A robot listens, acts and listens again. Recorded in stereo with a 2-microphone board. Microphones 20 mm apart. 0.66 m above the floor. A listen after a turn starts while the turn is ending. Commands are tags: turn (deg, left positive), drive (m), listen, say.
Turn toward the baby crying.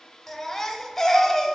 <turn deg="20"/>
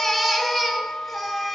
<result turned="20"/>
<say>Facing the baby crying, 1 to 2 m away.</say>